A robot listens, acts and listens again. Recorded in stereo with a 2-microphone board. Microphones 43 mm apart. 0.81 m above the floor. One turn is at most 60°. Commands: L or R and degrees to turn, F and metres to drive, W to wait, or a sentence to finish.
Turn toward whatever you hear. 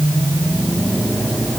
W
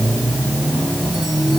W
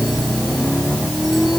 I can't make out anything.